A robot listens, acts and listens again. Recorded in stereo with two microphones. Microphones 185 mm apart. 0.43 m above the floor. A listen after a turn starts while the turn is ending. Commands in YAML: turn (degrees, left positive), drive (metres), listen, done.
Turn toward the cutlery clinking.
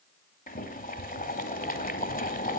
listen: true
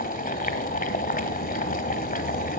listen: true
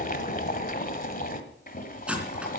turn: -30
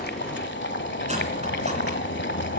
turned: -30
listen: true
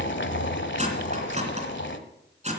turn: -145
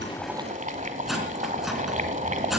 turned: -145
done: "Found it: cutlery clinking, straight ahead."